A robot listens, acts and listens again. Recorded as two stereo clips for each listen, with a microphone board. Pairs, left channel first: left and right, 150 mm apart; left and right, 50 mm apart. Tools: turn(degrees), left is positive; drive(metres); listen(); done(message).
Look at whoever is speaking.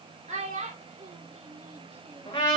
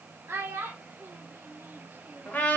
turn(degrees=-55)
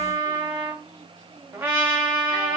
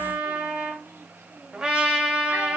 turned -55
listen()
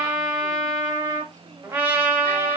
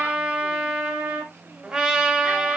listen()
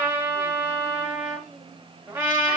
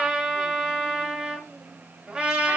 done("I heard a child speaking, but can't make it out now. It was about straight ahead or 70° right.")